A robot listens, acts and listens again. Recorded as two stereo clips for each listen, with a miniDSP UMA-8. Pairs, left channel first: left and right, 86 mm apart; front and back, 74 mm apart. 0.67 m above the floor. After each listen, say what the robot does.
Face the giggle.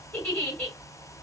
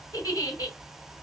Turn 20° left.
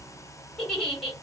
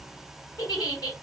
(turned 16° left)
Facing the giggle.